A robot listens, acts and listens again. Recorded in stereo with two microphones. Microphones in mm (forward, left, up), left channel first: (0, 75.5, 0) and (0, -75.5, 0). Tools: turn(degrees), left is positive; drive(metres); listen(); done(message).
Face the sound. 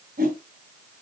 turn(degrees=-75)
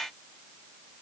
listen()
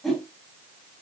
done("Found it: a whoosh, straight ahead, 2 to 4 m away.")